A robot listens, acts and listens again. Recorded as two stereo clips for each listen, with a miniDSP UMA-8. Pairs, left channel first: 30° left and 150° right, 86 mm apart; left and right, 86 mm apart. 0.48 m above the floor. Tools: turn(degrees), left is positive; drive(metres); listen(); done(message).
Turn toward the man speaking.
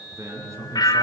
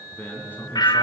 turn(degrees=155)
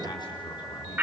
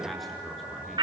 done("Found it: a man speaking, straight ahead, over 4 m away.")